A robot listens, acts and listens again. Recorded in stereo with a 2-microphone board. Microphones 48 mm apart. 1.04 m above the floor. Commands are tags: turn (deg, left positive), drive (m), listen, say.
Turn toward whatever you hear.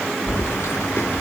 <turn deg="65"/>
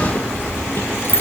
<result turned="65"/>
<turn deg="50"/>
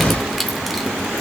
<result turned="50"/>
<say>Facing the keys jangling.</say>